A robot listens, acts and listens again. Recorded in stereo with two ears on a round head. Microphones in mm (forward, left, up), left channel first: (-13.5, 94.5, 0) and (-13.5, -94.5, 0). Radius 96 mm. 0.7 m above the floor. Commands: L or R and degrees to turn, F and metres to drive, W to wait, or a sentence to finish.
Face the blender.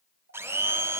R30
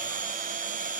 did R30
R140
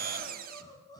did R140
R40
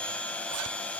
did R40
Facing the blender, 1 to 2 m away.